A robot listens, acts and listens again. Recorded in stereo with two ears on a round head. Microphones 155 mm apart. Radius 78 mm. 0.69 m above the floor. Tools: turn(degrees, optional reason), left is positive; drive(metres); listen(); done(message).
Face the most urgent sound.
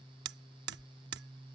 listen()
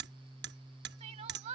turn(degrees=-40, reason="The crying: about 40° right or 140° right.")
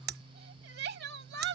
turn(degrees=-95, reason="So it is at 95° right.")
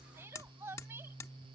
turn(degrees=-15, reason="The crying is now 15° right.")
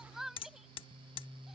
done("Found it: crying, straight ahead.")